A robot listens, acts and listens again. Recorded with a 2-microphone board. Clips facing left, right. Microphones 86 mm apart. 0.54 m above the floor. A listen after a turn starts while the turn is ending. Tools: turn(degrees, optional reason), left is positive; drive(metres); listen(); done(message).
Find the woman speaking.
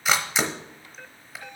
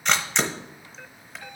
listen()
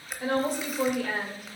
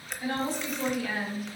turn(degrees=55, reason="The woman speaking: about 55° left or 125° left.")
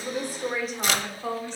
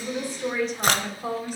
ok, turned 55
turn(degrees=-10, reason="So it is at 10° right.")
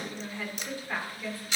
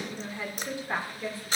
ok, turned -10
turn(degrees=-30, reason="The woman speaking is now 30° right.")
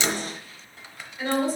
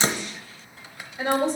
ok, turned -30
turn(degrees=-25, reason="The woman speaking is now 25° right.")
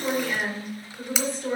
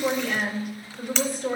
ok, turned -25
done("Found it: a woman speaking, straight ahead.")